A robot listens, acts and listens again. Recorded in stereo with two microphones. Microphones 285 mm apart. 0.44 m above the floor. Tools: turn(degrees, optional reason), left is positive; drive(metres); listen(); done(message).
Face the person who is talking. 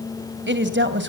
turn(degrees=-40, reason="The woman speaking: about 40° right or 140° right.")
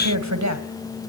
turn(degrees=-95, reason="So it is at 95° right.")
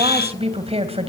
turn(degrees=-20, reason="The woman speaking is now 20° right.")
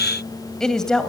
done("Facing the woman speaking.")